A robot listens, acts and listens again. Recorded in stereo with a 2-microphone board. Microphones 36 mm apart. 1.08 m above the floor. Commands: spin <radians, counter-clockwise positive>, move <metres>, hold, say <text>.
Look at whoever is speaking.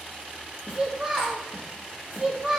spin -0.52
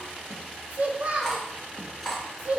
spin -2.44
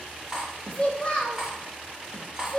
spin 0.52
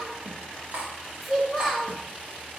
say Found it: a child speaking, straight ahead.